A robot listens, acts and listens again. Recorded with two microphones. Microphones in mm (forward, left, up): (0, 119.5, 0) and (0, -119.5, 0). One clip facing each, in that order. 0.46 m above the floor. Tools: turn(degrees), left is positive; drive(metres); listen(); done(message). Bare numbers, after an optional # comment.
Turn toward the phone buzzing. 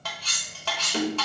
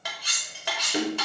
listen()
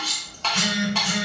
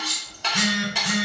turn(-90)
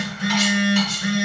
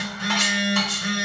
# So it is at 10° left.
turn(10)
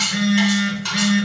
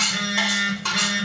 done("Found it: a phone buzzing, straight ahead, 1 to 2 m away.")